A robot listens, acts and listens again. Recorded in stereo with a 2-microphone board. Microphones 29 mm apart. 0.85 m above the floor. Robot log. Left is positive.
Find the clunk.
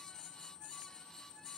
cmd idle
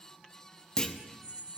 note: The clunk: about 20° left or 160° left.
cmd yaw +20
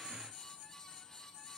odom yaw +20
cmd idle
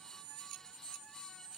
end: I heard a clunk, but can't make it out now. It was about straight ahead or 140° left.